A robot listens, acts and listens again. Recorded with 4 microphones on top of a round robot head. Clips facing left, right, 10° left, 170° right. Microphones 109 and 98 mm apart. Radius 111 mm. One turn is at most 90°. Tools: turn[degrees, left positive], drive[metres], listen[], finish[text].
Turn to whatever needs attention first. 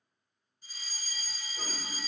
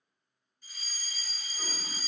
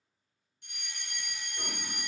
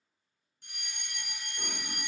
Thought: The fire alarm: 150° left.
Action: turn[90]
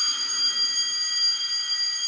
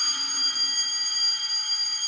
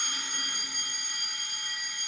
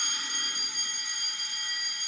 Thought: The fire alarm is now 85° left.
Action: turn[85]
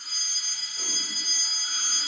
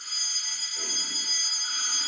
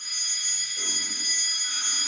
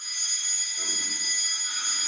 Action: finish[Found it: a fire alarm, straight ahead, 1 to 2 m away.]